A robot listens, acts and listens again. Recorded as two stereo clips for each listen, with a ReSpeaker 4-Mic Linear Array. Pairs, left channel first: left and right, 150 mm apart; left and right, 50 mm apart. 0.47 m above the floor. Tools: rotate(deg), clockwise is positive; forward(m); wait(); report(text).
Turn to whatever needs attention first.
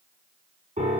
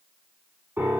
wait()
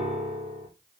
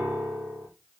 wait()
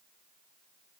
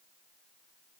report("I can't make out anything urgent, only a piano.")